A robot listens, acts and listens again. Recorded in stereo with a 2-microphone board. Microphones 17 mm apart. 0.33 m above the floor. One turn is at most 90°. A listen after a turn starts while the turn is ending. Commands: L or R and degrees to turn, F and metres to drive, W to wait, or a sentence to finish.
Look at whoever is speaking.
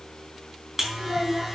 R60
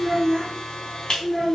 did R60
Facing the child speaking.